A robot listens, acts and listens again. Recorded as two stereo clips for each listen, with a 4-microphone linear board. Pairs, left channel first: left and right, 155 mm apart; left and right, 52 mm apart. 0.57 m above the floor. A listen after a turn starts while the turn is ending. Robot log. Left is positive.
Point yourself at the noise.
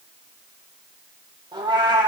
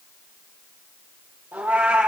note: The cat meowing: about 30° right or 150° right.
cmd yaw -30
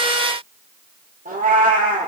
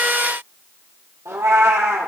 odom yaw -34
note: So it is at 115° right.
cmd yaw -115
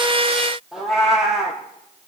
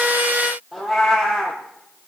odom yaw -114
end: Facing the cat meowing, 2 to 4 m away.